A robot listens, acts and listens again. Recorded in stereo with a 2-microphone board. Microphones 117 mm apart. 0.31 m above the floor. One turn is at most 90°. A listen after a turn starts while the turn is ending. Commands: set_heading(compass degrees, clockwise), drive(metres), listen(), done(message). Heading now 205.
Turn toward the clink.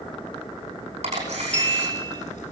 set_heading(175)
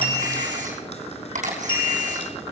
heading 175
set_heading(85)
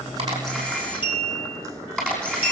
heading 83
set_heading(38)
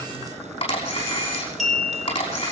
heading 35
done("Found it: a clink, straight ahead, 2 to 4 m away.")